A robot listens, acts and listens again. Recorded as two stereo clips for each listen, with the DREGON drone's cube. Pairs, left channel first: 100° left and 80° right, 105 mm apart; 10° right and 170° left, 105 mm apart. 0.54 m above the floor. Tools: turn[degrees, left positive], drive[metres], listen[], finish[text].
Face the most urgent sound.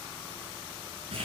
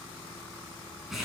Action: listen[]
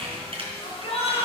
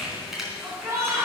Thought: The shout: 105° left.
Action: turn[105]
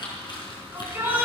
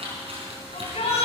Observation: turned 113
Thought: The shout is now 10° right.
Action: turn[-10]
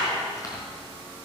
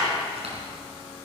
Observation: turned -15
Action: finish[Found it: a shout, straight ahead, over 4 m away.]